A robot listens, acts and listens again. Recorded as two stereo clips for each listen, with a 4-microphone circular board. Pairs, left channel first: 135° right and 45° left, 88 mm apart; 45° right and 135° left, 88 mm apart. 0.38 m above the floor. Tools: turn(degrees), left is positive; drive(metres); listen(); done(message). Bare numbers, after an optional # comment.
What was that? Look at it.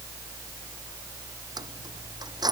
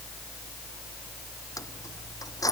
done("Facing the keys jangling.")